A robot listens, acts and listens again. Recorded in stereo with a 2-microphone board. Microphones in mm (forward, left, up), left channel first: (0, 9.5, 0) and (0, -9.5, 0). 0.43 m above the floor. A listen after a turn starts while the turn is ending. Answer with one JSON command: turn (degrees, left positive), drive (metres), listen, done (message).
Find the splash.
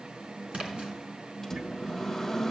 {"turn": -90}
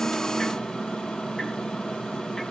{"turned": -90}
{"done": "I heard a splash from this way, but can't make it out now."}